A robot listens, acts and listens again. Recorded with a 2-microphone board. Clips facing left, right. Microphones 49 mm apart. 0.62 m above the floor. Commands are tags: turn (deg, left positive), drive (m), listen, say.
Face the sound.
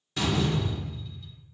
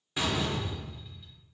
<turn deg="-30"/>
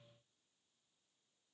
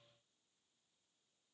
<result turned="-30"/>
<listen/>
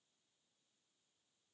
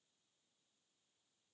<say>I heard a door slam, but can't make it out now. It was about 15° left or 135° right.</say>